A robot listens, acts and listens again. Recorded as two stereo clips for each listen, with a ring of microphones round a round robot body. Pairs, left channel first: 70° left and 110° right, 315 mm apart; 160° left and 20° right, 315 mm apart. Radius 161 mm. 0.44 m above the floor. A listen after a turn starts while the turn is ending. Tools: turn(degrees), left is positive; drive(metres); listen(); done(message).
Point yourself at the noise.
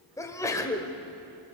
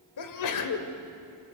turn(degrees=145)
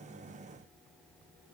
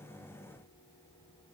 done("I heard a sneeze from this way, but can't make it out now.")